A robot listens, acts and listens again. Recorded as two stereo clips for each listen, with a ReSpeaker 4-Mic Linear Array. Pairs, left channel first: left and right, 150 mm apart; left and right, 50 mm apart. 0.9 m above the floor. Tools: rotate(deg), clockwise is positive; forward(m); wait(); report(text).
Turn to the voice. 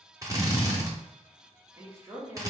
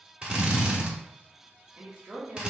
rotate(20)
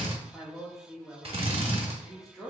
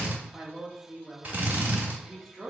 report("Found it: a woman speaking, straight ahead, 1 to 2 m away.")